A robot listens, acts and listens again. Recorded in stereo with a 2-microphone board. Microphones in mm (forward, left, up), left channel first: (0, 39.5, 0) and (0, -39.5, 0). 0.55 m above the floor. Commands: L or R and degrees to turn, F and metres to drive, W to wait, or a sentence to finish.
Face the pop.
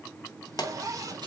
L60
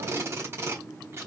W
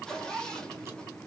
I heard a pop, but can't make it out now. It was about straight ahead or 60° left.